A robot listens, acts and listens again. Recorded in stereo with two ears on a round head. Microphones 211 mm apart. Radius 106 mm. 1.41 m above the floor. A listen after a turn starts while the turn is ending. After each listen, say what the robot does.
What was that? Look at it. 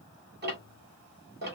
Turn 45° right.
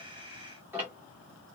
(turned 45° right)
Turn 10° right.
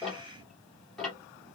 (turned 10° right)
Found it: ticking, straight ahead.